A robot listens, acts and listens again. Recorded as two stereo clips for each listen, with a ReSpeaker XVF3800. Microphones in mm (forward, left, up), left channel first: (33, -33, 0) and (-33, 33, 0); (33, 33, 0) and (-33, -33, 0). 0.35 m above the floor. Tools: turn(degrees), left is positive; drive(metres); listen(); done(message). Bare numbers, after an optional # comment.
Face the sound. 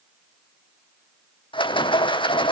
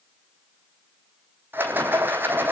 # The rattle: 70° right.
turn(-70)
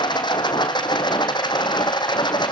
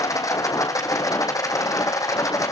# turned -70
# The rattle is now 10° right.
turn(-10)
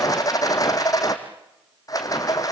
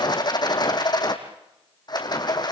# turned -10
done("Found it: a rattle, straight ahead, 2 to 4 m away.")